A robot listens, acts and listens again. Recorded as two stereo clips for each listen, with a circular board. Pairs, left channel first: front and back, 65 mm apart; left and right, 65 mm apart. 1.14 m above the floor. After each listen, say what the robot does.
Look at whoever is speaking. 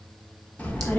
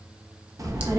Turn 65° right.
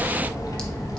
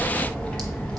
Turn 20° left.
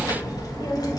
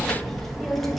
Facing the child speaking.